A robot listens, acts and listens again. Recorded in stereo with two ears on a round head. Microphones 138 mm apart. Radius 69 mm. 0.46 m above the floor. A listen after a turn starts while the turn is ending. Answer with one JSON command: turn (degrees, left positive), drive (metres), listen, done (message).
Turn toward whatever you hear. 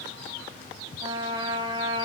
{"turn": -30}
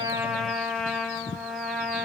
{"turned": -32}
{"done": "Facing the trumpet, 1 to 2 m away."}